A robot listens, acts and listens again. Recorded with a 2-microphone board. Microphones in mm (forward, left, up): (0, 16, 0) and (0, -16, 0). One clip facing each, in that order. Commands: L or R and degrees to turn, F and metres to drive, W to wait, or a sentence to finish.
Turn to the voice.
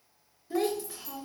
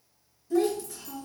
L25
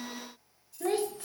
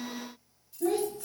L120
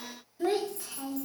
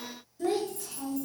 L25
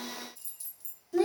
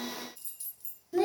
R10
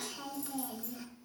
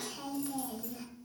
Found it: a child speaking, straight ahead.